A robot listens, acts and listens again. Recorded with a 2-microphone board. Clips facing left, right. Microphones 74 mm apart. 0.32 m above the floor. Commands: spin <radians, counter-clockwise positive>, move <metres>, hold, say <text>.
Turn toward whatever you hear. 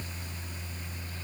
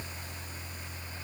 hold
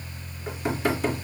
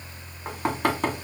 spin -1.22
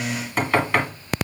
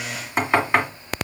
spin -0.35
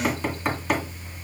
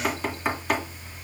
say Found it: knocking, straight ahead.